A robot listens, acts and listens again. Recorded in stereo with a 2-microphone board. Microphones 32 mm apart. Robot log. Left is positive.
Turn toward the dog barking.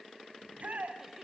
cmd idle
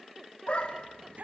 note: The dog barking: about 40° left or 140° left.
cmd yaw +40
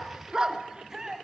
note: So it is at 20° right.
cmd yaw -20
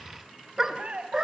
note: The dog barking is now 20° right.
cmd yaw -20
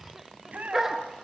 note: The dog barking is now 10° right.
cmd yaw -10
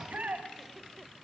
cmd idle
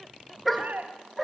end: Found it: a dog barking, straight ahead, 2 to 4 m away.